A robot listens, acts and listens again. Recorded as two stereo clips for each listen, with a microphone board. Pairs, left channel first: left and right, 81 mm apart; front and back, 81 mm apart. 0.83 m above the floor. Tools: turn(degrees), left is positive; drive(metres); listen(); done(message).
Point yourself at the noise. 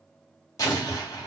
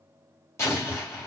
turn(degrees=50)
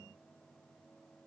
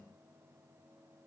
done("I heard an explosion from this way, but can't make it out now.")